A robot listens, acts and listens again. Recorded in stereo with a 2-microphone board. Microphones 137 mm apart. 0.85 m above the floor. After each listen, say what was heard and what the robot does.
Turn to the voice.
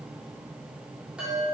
Keep listening.
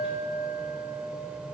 Keep listening.
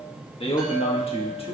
The man speaking: about 45° left or 135° left. Turn 45° left.
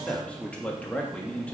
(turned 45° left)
So it is at 10° left. Turn 10° left.
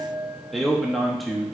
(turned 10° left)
Found it: a man speaking, straight ahead.